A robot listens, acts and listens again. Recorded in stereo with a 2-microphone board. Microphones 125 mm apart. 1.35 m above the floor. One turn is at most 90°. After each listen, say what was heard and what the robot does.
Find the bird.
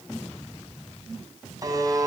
Keep listening.
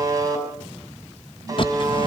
The bird: about 40° left or 140° left. Turn 40° left.
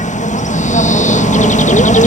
So it is at 95° left. Turn 90° left.
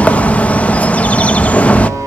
The bird is now 10° left. Turn 10° left.
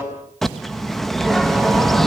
Found it: a bird, straight ahead, 1 to 2 m away.